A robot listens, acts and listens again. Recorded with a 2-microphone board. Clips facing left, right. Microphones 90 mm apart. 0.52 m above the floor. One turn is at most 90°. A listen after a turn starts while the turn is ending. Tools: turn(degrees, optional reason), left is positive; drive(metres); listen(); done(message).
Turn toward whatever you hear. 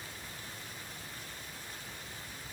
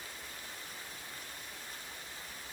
listen()
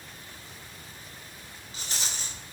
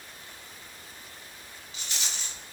turn(degrees=40, reason="The rattle: about 40° left or 140° left.")
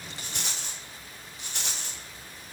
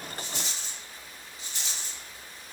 turn(degrees=90, reason="So it is at 100° left.")
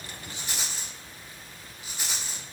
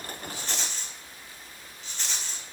turn(degrees=10, reason="The rattle is now 10° left.")
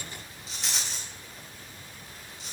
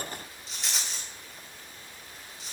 done("Facing the rattle, 1 to 2 m away.")